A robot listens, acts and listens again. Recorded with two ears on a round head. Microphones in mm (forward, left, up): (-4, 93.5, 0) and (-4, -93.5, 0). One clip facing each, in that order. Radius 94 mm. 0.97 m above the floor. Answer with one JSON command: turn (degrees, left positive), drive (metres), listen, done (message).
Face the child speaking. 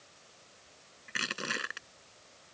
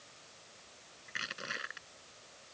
{"listen": true}
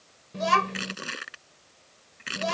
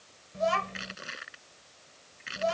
{"turn": 90}
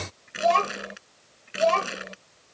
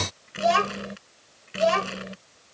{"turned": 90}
{"turn": -10}
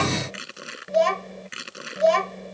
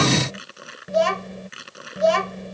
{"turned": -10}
{"done": "Found it: a child speaking, straight ahead."}